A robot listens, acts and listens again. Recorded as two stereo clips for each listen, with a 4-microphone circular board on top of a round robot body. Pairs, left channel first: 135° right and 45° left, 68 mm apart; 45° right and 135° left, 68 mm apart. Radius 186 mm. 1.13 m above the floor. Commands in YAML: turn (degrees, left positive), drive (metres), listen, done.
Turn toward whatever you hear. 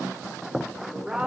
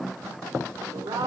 turn: 125
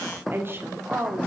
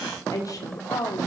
turn: -10
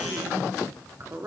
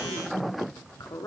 turn: -10
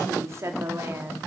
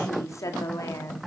done: "Facing the woman speaking, 2 to 4 m away."